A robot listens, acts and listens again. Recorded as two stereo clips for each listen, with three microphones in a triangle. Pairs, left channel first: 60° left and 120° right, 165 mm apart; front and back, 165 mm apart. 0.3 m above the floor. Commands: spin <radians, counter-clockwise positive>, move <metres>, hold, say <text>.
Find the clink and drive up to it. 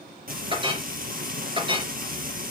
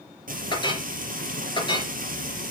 spin -1.05
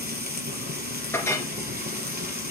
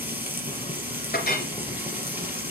spin -0.26
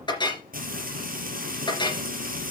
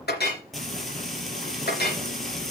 move 1.0
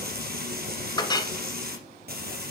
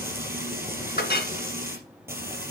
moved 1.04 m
move 1.0
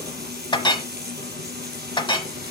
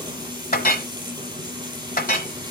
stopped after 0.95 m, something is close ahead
say Arrived at the clink, straight ahead.